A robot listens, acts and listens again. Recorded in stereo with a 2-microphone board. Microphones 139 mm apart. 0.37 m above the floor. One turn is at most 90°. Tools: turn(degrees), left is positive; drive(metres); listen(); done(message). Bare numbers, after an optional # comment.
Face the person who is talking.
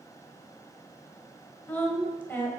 turn(30)
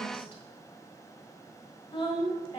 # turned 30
# So it is at 130° left.
turn(90)
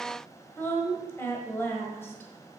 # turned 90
# The woman speaking is now 20° left.
turn(20)
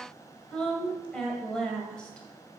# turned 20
# The woman speaking is now 10° left.
turn(10)
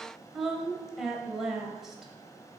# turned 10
done("Found it: a woman speaking, straight ahead.")